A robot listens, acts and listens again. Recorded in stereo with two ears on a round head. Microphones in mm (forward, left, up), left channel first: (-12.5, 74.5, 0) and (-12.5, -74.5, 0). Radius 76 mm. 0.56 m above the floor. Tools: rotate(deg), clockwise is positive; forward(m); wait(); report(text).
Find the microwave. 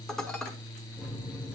rotate(30)
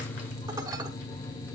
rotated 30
rotate(-20)
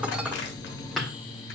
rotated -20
report("Found it: a microwave, straight ahead, 1 to 2 m away.")